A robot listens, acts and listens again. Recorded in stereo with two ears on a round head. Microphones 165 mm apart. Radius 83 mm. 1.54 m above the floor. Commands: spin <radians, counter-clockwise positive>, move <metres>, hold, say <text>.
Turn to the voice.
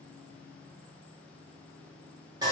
hold
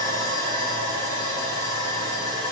hold
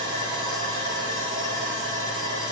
say I can't make out anyone speaking to turn to.